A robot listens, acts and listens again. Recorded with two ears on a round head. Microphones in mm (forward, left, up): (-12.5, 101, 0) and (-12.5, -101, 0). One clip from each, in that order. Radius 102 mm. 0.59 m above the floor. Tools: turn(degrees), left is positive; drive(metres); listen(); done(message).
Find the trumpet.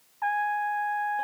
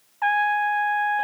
turn(degrees=-90)
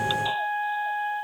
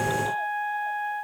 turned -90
turn(degrees=15)
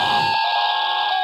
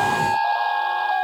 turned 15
listen()
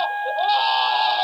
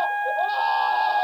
done("Found it: a trumpet, straight ahead.")